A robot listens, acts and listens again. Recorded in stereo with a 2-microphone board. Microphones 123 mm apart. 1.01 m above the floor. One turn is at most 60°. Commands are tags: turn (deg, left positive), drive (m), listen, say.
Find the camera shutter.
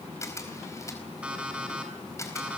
<turn deg="25"/>
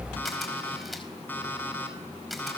<say>Facing the camera shutter.</say>